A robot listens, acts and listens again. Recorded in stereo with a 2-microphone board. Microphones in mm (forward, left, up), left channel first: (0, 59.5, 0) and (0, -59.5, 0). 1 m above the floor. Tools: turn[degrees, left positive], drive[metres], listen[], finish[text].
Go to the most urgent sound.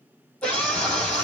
Action: turn[30]
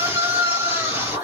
Thought: So it is at 20° right.
Action: turn[-20]
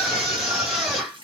Action: drive[1.0]
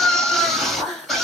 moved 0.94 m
Action: drive[1.0]
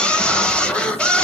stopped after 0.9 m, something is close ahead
Thought: The scream is now 10° left.
Action: turn[10]
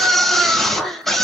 Action: finish[I am next to the scream.]